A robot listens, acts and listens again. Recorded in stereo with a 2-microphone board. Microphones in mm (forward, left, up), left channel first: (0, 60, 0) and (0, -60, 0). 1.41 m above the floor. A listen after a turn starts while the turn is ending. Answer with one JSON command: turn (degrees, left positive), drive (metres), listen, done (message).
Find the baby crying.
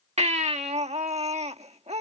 {"turn": -70}
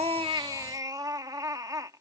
{"turn": -35}
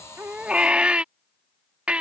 {"turn": -10}
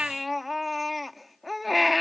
{"done": "Found it: a baby crying, straight ahead."}